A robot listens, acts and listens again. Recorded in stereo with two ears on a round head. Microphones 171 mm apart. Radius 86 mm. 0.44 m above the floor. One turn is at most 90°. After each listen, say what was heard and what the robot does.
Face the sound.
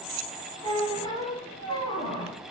The squeak: about 25° left or 155° left. Turn 25° left.
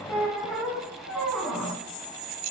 Facing the squeak.